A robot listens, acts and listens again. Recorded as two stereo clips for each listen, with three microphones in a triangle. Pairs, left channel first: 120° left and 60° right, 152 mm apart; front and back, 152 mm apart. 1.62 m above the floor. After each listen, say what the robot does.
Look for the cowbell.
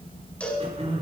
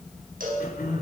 Turn 160° right.
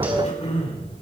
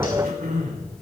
Keep listening.
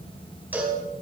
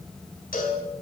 Turn 20° left.
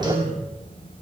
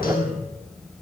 Keep listening.
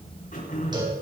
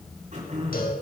Facing the cowbell, over 4 m away.